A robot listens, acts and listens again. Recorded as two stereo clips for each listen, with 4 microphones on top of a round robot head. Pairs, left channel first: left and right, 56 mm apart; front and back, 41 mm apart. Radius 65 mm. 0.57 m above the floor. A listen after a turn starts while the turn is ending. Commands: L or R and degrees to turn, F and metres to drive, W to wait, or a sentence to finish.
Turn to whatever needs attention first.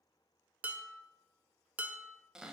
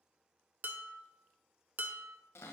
W
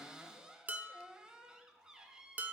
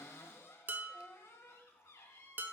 W
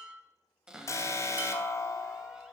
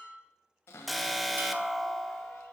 L95
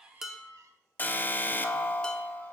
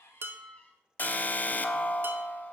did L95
L40
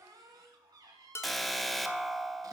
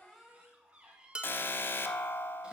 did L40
Found it: an alarm, straight ahead.